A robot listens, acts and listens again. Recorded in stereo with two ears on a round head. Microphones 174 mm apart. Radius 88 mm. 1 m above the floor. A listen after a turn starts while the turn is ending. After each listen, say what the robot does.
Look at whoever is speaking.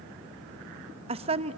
Turn 30° right.
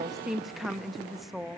Found it: a woman speaking, straight ahead, under 1 m away.